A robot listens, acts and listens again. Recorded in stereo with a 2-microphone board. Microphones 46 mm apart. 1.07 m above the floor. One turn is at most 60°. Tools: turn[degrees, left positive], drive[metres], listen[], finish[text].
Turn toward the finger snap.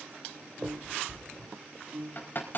Thought: The finger snap: about 20° left or 160° left.
Action: turn[20]
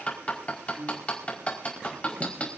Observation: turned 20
Action: listen[]
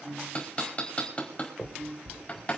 Thought: So it is at 140° left.
Action: turn[60]
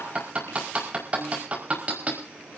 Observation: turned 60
Thought: Nothing new. It was at 80° left.
Action: turn[60]
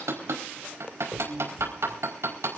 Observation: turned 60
Thought: The finger snap is now 15° left.
Action: turn[15]
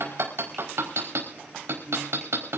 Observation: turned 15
Action: listen[]
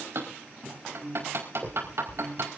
Action: finish[Facing the finger snap, over 4 m away.]